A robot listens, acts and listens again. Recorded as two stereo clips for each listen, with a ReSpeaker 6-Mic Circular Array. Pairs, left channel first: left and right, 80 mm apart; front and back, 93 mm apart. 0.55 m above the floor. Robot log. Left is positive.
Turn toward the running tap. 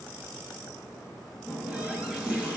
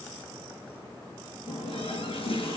note: The running tap: 15° right.
cmd yaw -15
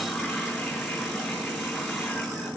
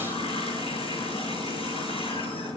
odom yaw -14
end: Found it: a running tap, straight ahead, over 4 m away.